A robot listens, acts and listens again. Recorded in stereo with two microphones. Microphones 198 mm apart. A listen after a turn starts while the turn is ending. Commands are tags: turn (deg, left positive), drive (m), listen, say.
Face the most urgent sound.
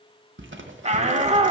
<turn deg="-35"/>
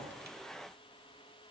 <listen/>
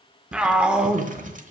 <say>Facing the shout, 1 to 2 m away.</say>